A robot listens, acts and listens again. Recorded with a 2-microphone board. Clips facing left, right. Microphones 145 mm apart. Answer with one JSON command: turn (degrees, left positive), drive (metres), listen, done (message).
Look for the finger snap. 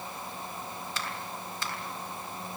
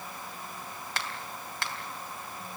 {"turn": -70}
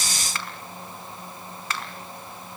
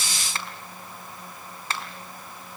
{"turn": -30}
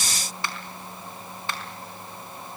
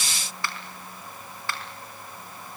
{"turn": 20}
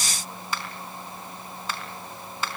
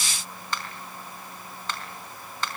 {"turn": 10}
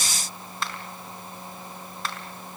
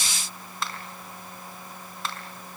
{"done": "Found it: a finger snap, straight ahead."}